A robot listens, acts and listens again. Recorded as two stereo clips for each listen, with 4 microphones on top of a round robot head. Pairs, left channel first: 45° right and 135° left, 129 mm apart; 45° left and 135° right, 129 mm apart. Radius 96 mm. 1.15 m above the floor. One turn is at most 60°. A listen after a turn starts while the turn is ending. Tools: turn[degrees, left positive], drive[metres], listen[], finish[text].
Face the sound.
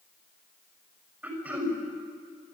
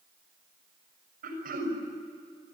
Thought: The throat clearing: 150° right.
Action: turn[-60]
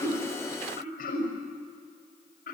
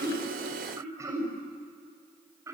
Thought: The throat clearing is now 65° right.
Action: turn[-60]
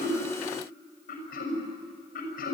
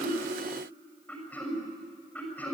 Thought: The throat clearing is now 30° right.
Action: turn[-30]
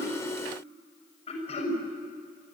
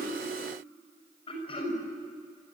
Action: finish[Found it: throat clearing, straight ahead, over 4 m away.]